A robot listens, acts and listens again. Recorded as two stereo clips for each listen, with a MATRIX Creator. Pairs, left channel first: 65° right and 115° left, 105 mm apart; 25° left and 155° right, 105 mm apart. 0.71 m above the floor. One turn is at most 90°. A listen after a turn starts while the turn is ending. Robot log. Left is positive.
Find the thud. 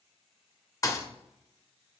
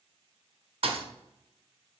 note: The thud: 125° right.
cmd yaw -90
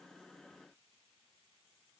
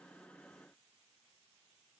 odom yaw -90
note: Nothing new. It was at 35° right.
cmd yaw -35
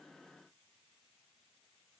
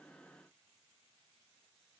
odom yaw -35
end: I heard a thud from this way, but can't make it out now.